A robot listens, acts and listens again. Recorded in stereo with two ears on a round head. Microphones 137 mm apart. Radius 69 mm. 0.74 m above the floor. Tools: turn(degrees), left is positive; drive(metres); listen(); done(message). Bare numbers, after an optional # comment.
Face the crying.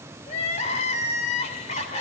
# The crying: about 45° left or 135° left.
turn(45)
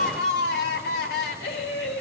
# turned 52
# So it is at 80° left.
turn(80)
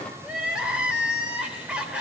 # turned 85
done("Found it: crying, straight ahead.")